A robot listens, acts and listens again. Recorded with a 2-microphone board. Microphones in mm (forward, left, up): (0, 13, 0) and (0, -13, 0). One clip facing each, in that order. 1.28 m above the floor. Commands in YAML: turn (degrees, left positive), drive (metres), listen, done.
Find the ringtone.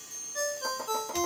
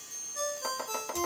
turn: 45
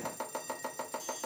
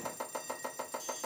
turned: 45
listen: true
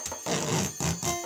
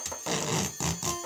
turn: 85
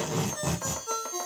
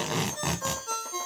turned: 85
done: "Facing the ringtone."